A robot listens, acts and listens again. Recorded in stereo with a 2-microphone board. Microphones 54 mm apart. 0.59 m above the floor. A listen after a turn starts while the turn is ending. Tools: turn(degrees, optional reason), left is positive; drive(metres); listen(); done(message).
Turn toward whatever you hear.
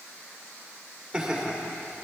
turn(degrees=-30)
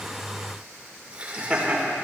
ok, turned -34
turn(degrees=-20, reason="The laughter: about 20° right or 160° right.")
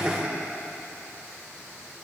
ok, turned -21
turn(degrees=-150, reason="So it is at 150° right.")
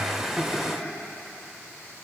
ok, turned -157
done("Found it: laughter, straight ahead.")